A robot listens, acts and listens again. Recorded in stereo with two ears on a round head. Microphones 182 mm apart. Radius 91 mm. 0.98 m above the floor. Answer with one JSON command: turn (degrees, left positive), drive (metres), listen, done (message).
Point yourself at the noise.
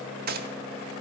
{"turn": -50}
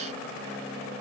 {"listen": true}
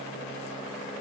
{"done": "I heard a gunshot, but can't make it out now. It was about straight ahead or 80° right."}